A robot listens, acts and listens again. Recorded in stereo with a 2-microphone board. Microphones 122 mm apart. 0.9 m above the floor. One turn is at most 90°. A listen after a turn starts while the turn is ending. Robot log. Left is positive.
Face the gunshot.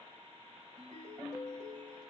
cmd idle
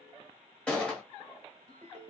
cmd yaw +30
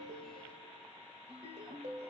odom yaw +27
cmd idle
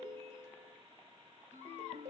end: I heard a gunshot, but can't make it out now. It was about 15° right or 145° left.